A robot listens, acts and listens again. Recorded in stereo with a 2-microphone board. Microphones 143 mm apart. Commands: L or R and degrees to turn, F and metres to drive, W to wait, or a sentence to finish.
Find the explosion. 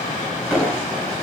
L30
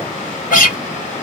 W
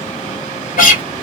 I heard an explosion, but can't make it out now. It was about 25° right or 145° left.